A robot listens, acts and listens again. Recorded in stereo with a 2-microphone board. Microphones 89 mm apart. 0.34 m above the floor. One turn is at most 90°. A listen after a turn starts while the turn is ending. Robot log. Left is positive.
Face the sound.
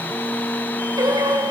note: The singing: about 55° right or 125° right.
cmd yaw -55
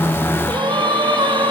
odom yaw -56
note: So it is at 65° right.
cmd yaw -65
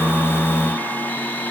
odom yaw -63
cmd idle
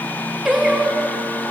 end: Found it: singing, straight ahead.